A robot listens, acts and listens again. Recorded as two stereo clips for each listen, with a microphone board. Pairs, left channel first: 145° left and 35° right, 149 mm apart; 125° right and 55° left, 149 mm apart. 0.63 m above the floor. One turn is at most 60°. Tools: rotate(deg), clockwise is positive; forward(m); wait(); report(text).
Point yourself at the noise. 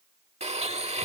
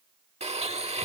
rotate(-10)
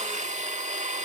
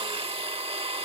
report("Found it: a blender, straight ahead.")